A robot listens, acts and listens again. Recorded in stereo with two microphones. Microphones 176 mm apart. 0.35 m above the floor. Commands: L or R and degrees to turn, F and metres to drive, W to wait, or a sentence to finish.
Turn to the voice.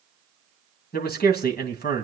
L65
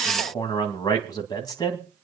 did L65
L25
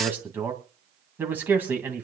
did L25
R10
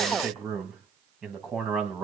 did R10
Facing the man speaking.